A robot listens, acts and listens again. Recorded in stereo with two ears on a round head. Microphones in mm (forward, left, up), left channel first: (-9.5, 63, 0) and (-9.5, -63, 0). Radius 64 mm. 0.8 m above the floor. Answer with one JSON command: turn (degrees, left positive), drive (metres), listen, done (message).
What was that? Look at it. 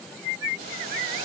{"turn": -70}
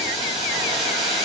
{"turn": -40}
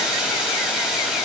{"done": "Facing the boiling."}